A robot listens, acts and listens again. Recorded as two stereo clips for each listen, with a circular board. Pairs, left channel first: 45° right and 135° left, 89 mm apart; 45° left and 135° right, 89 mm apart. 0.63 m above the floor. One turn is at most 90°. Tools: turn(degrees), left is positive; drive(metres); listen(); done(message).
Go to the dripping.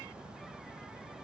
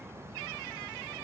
listen()
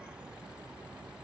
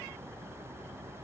listen()
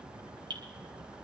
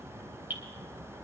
turn(degrees=90)
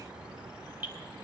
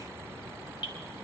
turn(degrees=65)
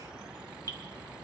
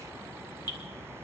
listen()
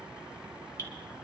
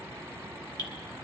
drive(metres=1.0)
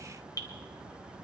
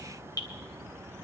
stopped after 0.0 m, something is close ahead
done("Blocked. The dripping is further on, straight ahead.")